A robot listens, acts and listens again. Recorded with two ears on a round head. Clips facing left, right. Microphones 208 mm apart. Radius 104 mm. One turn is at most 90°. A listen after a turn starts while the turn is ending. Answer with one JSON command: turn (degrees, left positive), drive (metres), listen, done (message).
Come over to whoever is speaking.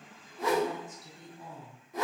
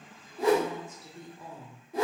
{"turn": -45}
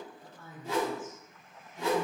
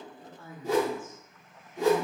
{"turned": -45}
{"turn": -10}
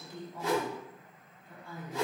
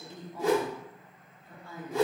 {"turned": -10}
{"drive": 1.0}
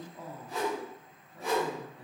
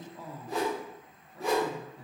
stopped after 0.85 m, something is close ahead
{"done": "I am next to the woman speaking."}